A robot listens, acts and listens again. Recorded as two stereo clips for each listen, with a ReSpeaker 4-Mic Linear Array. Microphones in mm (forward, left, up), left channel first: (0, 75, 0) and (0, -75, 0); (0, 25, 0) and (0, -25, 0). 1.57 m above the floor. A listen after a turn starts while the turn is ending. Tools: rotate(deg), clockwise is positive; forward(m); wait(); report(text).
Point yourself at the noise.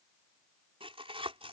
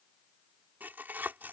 rotate(40)
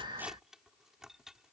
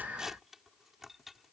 report("Facing the tearing paper.")